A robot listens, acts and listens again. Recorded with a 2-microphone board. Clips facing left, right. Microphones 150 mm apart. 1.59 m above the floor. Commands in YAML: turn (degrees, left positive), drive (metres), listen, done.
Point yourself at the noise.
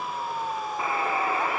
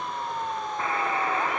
turn: 30
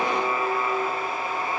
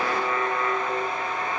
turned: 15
turn: 160
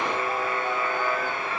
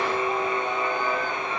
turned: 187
turn: -30
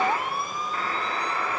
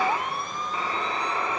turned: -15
turn: -10
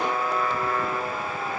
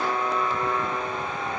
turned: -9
done: "Found it: a buzzer, straight ahead."